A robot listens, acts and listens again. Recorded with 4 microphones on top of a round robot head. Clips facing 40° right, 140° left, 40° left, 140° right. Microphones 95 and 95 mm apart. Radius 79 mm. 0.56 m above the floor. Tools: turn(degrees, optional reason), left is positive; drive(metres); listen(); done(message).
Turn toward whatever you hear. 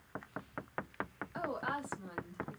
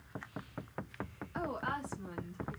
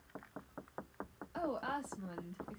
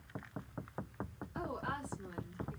turn(degrees=35, reason="The woman speaking: 35° left.")
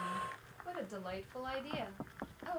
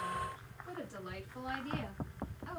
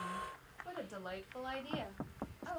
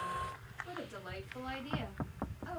turn(degrees=-20, reason="The woman speaking is now 20° right.")
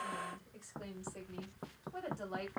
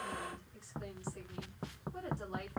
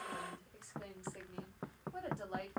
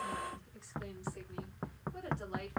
done("Facing the woman speaking.")